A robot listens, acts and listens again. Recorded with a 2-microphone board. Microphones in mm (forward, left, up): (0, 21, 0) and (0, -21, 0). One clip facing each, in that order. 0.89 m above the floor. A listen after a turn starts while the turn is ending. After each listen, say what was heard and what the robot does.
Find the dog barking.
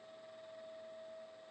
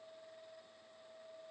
Keep listening.
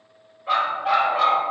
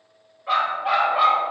Turn 30° right.
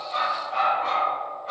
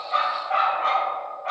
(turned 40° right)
So it is at 110° right. Turn 110° right.
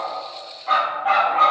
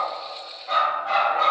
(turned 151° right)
The dog barking is now 50° left. Turn 50° left.
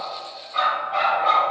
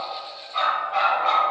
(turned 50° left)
Facing the dog barking.